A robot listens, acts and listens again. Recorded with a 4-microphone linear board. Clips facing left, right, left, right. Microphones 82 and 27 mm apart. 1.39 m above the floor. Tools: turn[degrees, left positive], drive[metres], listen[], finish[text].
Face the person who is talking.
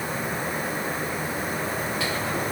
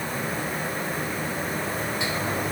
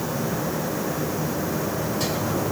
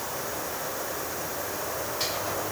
Action: listen[]
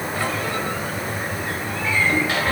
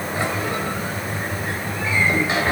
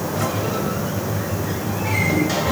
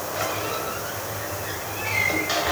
Action: listen[]
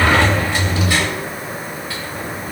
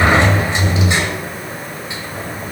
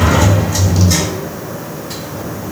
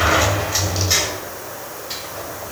Action: finish[I can't make out anyone speaking to turn to.]